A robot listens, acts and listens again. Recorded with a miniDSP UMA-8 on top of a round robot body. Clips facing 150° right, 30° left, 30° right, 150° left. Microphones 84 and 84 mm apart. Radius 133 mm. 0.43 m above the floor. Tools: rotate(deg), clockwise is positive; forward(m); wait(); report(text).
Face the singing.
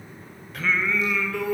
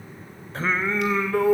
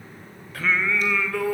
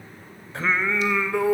rotate(-80)
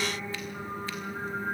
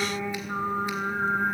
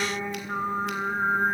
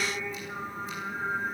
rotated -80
rotate(-15)
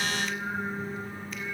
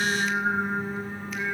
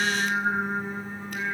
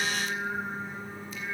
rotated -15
report("Facing the singing, 2 to 4 m away.")